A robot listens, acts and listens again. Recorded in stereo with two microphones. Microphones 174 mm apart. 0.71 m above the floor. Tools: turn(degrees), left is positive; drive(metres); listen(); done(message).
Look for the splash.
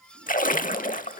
turn(degrees=55)
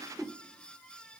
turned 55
listen()
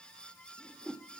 done("I heard a splash, but can't make it out now. It was about straight ahead or 70° left.")